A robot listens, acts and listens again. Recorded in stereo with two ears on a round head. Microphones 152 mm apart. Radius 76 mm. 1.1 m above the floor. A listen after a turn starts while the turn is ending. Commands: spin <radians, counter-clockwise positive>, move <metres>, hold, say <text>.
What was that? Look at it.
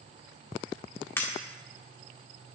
spin 0.52
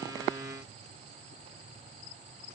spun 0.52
hold
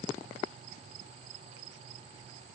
say I heard breaking glass, but can't make it out now. It was about 15° right or 135° left.